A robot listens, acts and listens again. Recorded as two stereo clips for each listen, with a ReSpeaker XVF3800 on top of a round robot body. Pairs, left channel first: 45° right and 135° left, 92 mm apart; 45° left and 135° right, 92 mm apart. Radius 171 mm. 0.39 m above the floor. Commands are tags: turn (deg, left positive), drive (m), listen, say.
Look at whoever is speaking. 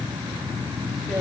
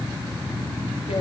<listen/>
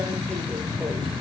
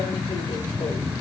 <listen/>
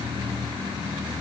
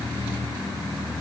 <say>I can't make out anyone speaking to turn to.</say>